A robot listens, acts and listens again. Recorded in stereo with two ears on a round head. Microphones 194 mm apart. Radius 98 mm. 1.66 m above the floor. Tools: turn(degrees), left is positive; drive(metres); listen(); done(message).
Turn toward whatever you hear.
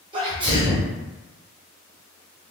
turn(degrees=-25)
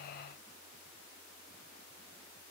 listen()
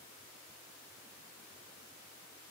done("I heard a sneeze, but can't make it out now. It was about straight ahead or 130° right.")